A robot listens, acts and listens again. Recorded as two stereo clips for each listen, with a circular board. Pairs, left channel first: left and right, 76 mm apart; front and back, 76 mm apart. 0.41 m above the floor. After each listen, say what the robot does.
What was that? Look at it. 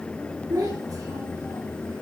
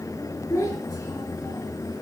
Turn 50° right.
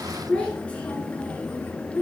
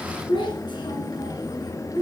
Turn 25° left.
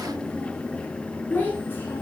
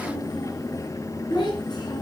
Turn 25° left.
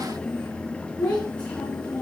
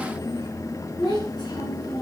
Turn 15° left.
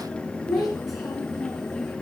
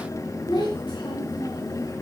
Found it: a child speaking, straight ahead.